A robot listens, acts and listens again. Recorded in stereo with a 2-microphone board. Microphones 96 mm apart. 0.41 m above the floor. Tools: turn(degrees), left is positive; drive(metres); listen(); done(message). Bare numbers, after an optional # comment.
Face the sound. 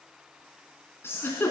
# The giggle: about 25° left or 155° left.
turn(25)
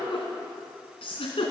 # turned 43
# So it is at 115° left.
turn(115)
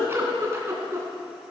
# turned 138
# The giggle is now 25° right.
turn(-25)
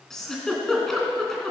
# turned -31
done("Found it: a giggle, straight ahead.")